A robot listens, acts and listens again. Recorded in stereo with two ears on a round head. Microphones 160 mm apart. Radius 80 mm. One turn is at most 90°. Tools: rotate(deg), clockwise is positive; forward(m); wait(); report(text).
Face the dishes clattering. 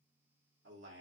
wait()
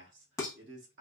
rotate(-20)
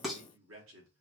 report("Facing the dishes clattering.")